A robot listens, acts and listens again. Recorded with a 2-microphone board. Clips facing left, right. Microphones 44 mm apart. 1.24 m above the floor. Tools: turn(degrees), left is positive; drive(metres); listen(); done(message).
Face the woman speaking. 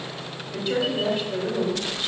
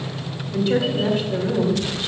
turn(degrees=30)
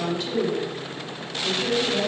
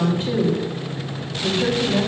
turn(degrees=-30)
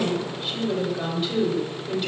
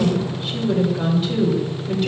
done("Found it: a woman speaking, straight ahead.")